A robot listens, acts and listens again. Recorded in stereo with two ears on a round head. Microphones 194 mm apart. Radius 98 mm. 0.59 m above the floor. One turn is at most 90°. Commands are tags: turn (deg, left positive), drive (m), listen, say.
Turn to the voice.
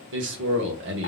<turn deg="-60"/>
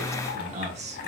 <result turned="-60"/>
<turn deg="-35"/>
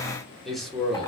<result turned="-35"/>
<say>Found it: a man speaking, straight ahead.</say>